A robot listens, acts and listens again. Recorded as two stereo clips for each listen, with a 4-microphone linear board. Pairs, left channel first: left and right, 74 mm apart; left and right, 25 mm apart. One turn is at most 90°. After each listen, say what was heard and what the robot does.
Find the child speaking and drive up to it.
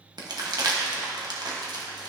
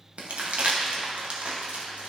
Keep listening.
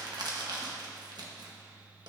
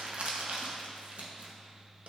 Keep listening.
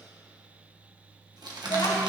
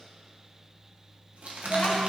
Turn 90° left.
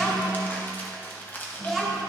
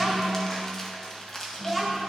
Drive 1.0 m forward.
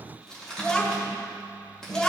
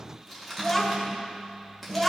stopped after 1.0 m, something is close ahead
The child speaking is now 10° left. Turn 10° left.
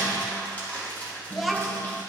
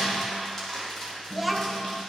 I am next to the child speaking.